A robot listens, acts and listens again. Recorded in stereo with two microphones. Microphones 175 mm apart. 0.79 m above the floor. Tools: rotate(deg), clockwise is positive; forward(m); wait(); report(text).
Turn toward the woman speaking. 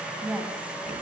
rotate(30)
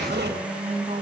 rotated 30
rotate(140)
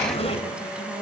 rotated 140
report("Found it: a woman speaking, straight ahead.")